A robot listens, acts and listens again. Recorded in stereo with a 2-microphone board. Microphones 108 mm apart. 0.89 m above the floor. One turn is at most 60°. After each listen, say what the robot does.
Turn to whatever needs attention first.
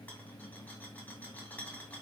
Keep listening.
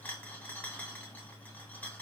Keep listening.
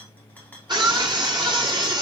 Turn 45° right.
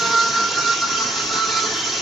Found it: a scream, straight ahead.